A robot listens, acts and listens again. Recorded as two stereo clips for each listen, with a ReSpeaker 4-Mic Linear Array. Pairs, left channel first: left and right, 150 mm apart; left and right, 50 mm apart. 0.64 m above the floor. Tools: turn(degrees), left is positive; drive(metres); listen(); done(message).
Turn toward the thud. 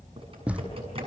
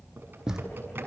turn(degrees=-30)
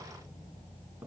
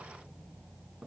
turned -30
listen()
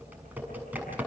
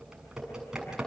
done("I heard a thud, but can't make it out now. It was about 20° left or 140° right.")